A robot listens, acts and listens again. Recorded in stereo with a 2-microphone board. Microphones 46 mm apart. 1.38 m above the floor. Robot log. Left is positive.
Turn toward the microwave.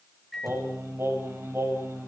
cmd yaw +30
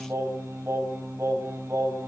cmd idle
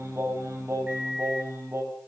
note: So it is at 30° right.
cmd yaw -30
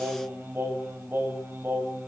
cmd idle
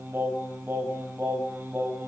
cmd idle
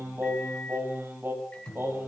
note: The microwave is now 20° left.
cmd yaw +20
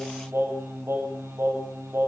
cmd idle
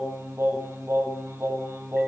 cmd idle
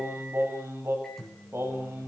end: Found it: a microwave, straight ahead.